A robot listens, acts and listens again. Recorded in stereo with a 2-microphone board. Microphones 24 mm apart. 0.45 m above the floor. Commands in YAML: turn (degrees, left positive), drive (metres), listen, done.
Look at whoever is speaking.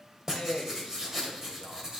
turn: 55
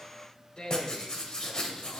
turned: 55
turn: 50
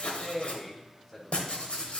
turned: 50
turn: 10
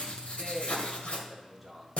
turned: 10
done: "Facing the man speaking, 1 to 2 m away."